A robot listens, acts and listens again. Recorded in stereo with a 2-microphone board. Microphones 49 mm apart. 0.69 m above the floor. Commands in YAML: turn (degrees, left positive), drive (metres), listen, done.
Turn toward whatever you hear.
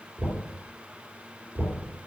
turn: -70
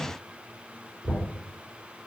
done: "Facing the knocking."